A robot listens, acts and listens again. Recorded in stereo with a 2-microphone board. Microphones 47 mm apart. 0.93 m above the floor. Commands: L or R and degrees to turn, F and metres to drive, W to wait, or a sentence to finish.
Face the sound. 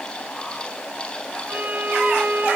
R45
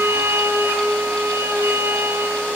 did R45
R90
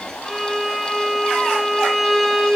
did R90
Facing the violin, over 4 m away.